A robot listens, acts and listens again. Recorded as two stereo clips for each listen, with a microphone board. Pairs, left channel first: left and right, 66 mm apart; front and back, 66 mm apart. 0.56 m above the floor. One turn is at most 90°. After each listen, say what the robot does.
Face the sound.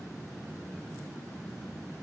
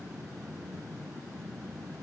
Keep listening.
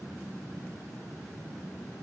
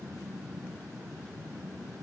Keep listening.
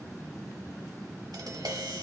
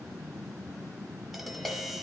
Turn 90° right.
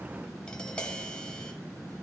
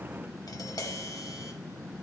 Turn 15° left.
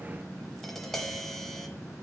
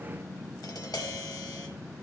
Found it: tapping, straight ahead, 1 to 2 m away.